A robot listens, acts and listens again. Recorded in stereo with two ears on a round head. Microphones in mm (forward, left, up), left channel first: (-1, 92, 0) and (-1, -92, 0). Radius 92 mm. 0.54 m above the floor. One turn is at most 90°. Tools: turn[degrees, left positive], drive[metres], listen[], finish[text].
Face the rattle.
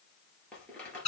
Action: turn[30]
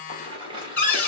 Thought: So it is at 25° right.
Action: turn[-25]
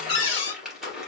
Action: finish[Facing the rattle, 2 to 4 m away.]